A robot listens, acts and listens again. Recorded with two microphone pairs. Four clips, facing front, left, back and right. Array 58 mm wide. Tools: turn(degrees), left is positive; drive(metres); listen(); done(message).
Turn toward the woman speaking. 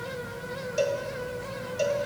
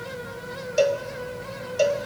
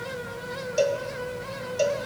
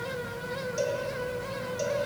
listen()
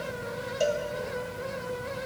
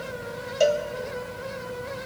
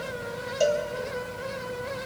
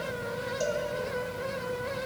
listen()
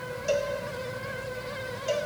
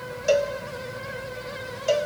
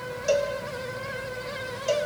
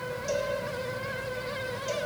done("I can't make out a woman speaking, only a cowbell.")